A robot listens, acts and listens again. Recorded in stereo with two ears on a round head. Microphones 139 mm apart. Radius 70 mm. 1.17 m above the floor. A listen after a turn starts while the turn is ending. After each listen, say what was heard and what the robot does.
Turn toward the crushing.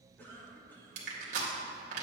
The crushing: about 60° right or 120° right. Turn 60° right.
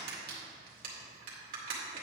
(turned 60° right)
So it is at 60° right. Turn 60° right.
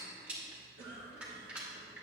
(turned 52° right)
The crushing is now 10° right. Turn 10° right.
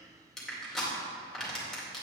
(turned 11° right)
Found it: crushing, straight ahead, 2 to 4 m away.